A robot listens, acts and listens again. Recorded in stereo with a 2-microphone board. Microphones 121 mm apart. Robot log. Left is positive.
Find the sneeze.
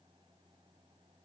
cmd idle
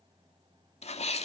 note: The sneeze: about 65° left or 115° left.
cmd yaw +65
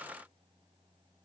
cmd idle
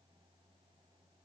end: I heard a sneeze, but can't make it out now. It was about straight ahead or 50° left.